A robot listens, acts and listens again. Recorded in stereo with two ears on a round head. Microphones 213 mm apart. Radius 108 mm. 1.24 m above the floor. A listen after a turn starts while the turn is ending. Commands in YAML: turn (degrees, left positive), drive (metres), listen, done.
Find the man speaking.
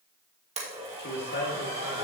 turn: 45
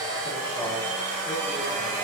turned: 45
listen: true
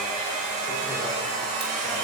listen: true
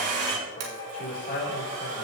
turn: 40
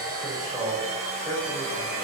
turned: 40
done: "Facing the man speaking, 2 to 4 m away."